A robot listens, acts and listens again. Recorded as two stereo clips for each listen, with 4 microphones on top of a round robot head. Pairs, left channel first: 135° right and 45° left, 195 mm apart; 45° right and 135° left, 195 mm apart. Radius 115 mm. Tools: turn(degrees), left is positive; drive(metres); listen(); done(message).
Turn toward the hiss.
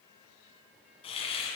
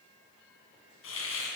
turn(degrees=-70)
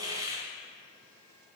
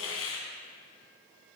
turn(degrees=-25)
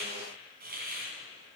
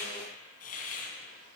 done("Found it: a hiss, straight ahead.")